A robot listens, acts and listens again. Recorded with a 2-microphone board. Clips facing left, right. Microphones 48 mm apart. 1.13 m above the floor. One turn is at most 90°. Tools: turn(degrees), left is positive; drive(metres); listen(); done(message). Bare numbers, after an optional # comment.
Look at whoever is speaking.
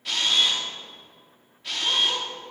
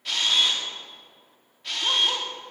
listen()
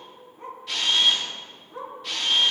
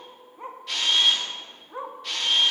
listen()
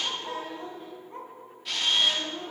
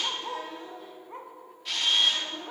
# The child speaking: about 40° left or 140° left.
turn(40)
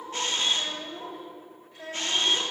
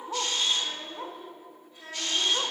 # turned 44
# So it is at 95° left.
turn(90)
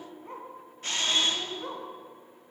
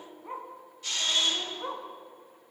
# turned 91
done("Found it: a child speaking, straight ahead.")